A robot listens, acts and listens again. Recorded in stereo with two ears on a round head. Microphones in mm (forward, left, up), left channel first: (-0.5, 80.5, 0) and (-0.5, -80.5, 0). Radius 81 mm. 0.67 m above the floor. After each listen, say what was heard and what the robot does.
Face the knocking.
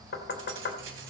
The knocking: about 65° left or 115° left. Turn 65° left.
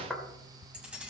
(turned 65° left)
Facing the knocking, 2 to 4 m away.